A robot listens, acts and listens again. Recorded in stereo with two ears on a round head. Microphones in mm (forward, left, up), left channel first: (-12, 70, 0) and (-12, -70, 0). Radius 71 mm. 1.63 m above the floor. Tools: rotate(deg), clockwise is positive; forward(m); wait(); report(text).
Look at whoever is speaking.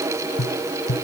wait()
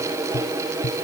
wait()
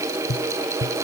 report("I can't make out anyone speaking, only tapping.")